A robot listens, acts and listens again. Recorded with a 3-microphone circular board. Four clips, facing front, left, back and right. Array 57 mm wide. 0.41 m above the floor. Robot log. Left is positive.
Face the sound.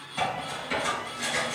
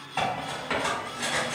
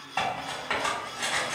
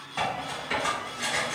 note: The cutlery clinking: 155° left.
cmd yaw +155
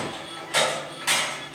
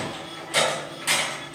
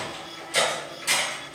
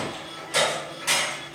end: Facing the cutlery clinking, 1 to 2 m away.